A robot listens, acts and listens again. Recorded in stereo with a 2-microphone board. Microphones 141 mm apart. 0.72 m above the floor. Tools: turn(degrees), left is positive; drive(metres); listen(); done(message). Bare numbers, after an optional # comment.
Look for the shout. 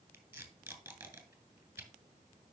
listen()
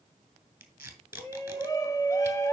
# The shout: about 20° left or 160° left.
turn(20)
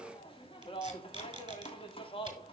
# So it is at 140° left.
turn(140)
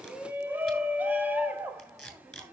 # The shout is now 15° right.
turn(-15)
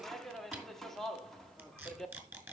done("Found it: a shout, straight ahead, 1 to 2 m away.")